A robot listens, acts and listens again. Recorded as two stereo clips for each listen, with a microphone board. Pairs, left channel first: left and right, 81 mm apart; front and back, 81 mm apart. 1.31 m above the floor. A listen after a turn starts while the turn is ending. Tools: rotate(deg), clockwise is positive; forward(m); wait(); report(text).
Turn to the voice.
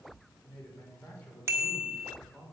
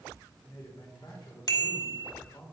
rotate(-20)
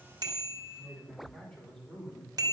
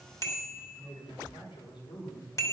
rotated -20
report("Facing the man speaking, over 4 m away.")